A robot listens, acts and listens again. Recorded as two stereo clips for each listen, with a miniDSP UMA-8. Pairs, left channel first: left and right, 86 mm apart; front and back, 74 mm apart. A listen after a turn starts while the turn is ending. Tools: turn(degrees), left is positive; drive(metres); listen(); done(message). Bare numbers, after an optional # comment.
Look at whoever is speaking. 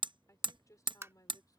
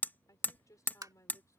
# The woman speaking: 45° left.
turn(45)
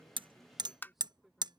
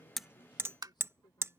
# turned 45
listen()
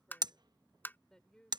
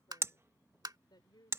# The woman speaking is now 10° left.
turn(10)
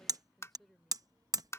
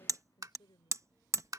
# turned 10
done("Facing the woman speaking.")